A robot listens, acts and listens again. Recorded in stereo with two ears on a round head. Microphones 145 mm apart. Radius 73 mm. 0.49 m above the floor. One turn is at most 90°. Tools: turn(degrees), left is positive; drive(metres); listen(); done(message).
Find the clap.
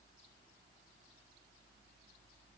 listen()
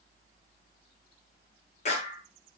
turn(degrees=50)
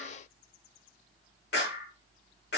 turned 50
turn(degrees=80)
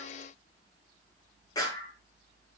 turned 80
turn(degrees=25)
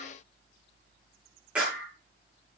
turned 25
turn(degrees=-10)
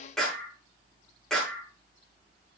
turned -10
done("Facing the clap, over 4 m away.")